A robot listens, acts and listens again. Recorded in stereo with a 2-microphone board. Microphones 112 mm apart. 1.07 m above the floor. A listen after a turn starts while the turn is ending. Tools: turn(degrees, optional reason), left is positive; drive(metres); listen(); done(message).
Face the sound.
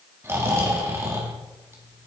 turn(degrees=-20, reason="The snoring: about 20° right or 160° right.")
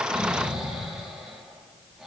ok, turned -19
done("Found it: snoring, straight ahead.")